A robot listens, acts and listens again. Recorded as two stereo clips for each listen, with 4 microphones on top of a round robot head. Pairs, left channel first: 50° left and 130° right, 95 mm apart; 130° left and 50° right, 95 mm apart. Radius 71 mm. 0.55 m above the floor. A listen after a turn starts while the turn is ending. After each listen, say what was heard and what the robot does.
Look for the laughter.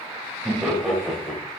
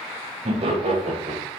The laughter: 35° right. Turn 35° right.
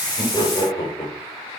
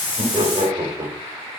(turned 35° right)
Found it: laughter, straight ahead.